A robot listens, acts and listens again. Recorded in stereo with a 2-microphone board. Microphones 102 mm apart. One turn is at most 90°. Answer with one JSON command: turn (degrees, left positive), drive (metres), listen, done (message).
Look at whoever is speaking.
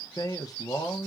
{"turn": 40}
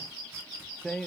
{"done": "Found it: a man speaking, straight ahead, under 1 m away."}